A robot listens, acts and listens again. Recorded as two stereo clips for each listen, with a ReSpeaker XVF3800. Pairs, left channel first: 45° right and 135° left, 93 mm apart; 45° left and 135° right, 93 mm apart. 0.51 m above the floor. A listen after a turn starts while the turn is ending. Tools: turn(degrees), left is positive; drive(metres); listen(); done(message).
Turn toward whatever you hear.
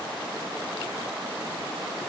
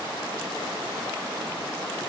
listen()
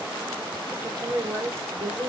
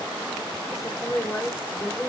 turn(degrees=110)
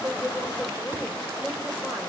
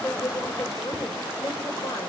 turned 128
turn(degrees=-15)
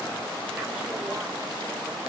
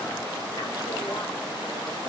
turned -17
listen()
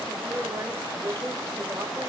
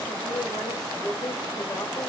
turn(degrees=65)
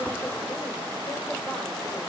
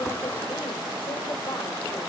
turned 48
turn(degrees=20)
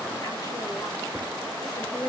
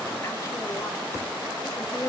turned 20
done("Facing the woman speaking, 2 to 4 m away.")